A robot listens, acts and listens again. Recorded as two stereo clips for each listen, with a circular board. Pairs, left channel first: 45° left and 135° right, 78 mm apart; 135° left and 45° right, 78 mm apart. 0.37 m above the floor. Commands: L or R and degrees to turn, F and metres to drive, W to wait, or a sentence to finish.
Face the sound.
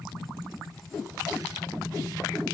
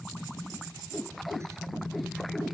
W
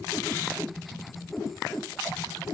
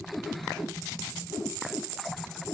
W
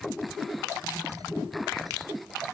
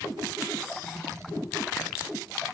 I can't make out anything.